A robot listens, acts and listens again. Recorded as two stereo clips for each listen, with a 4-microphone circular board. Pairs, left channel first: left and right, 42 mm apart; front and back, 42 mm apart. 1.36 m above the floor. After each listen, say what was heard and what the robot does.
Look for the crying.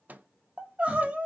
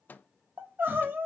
The crying: 150° right. Turn 150° right.
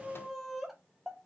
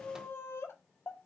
Found it: crying, straight ahead.